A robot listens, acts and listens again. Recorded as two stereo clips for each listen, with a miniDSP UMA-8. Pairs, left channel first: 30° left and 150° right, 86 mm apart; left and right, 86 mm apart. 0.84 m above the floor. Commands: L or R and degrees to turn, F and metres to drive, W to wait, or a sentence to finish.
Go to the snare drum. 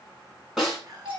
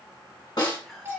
L125
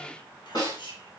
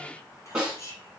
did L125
R10
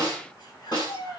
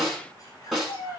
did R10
F1.0
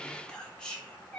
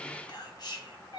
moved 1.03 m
W
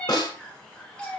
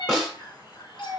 F1.0
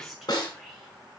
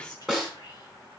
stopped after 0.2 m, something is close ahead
I am next to the snare drum.